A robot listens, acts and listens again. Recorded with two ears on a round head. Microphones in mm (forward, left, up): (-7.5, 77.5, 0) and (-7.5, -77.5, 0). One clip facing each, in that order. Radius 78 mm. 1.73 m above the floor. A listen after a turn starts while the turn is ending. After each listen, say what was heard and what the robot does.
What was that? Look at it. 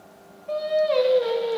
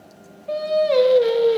The singing: about 65° right or 115° right. Turn 65° right.
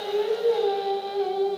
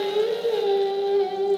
So it is at 20° right. Turn 20° right.
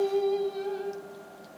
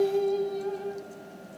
The singing is now 10° left. Turn 10° left.
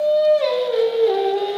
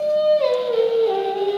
The singing is now 15° left. Turn 15° left.
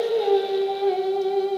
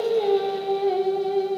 Facing the singing.